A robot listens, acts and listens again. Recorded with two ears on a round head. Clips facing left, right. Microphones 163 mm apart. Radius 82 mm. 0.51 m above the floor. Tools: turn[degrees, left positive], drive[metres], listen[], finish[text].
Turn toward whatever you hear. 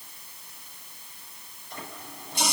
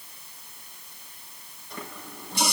Thought: The running tap: about 65° right or 115° right.
Action: turn[-65]
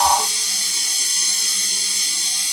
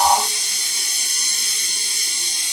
Thought: So it is at 50° right.
Action: turn[-50]
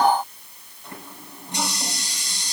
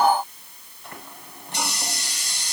Thought: The running tap is now 10° left.
Action: turn[10]
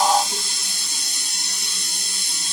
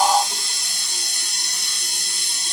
Action: finish[Found it: a running tap, straight ahead, over 4 m away.]